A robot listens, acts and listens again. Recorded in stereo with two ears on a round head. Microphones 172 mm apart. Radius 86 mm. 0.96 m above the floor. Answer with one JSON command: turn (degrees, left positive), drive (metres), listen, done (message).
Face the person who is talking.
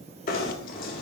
{"listen": true}
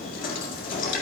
{"listen": true}
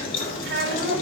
{"turn": -70}
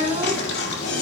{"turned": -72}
{"turn": -35}
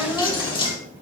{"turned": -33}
{"done": "Facing the child speaking, 2 to 4 m away."}